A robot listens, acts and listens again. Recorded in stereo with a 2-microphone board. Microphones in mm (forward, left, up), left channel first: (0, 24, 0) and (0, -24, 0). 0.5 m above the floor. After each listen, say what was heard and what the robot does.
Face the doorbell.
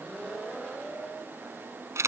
Keep listening.
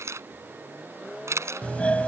The doorbell: about 25° left or 155° left. Turn 25° left.
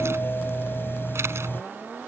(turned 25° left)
So it is at 130° left. Turn 130° left.
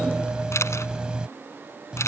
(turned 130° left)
The doorbell is now 20° right. Turn 20° right.
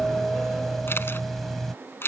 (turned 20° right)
Facing the doorbell.